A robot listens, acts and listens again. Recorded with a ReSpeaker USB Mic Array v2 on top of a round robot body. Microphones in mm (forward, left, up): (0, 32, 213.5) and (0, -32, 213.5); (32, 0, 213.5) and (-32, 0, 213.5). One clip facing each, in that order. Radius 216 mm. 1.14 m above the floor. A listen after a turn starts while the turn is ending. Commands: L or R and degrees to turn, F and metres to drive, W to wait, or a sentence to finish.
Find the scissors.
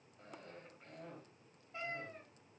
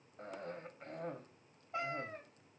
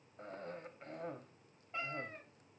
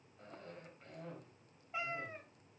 W
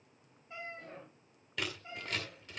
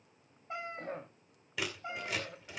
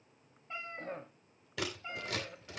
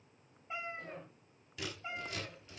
Found it: scissors, straight ahead.